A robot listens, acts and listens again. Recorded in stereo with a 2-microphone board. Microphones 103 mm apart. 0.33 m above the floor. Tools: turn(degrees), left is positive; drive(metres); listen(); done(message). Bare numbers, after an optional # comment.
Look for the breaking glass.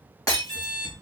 # The breaking glass: about 35° left or 145° left.
turn(35)
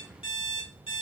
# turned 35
listen()
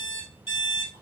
done("I heard breaking glass, but can't make it out now. It was about straight ahead or 110° left.")